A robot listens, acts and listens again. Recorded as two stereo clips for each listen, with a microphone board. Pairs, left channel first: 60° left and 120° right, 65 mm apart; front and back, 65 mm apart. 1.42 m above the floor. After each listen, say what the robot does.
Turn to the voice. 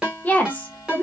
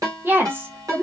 Turn 125° left.
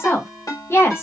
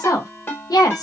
Turn 10° left.
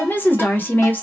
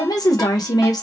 Found it: a woman speaking, straight ahead.